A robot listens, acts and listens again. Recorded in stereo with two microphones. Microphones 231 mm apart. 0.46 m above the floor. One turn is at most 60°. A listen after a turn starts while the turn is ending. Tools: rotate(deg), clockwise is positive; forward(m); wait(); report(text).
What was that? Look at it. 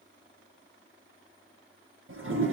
rotate(60)
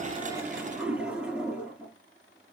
report("Found it: a toilet flushing, straight ahead, 2 to 4 m away.")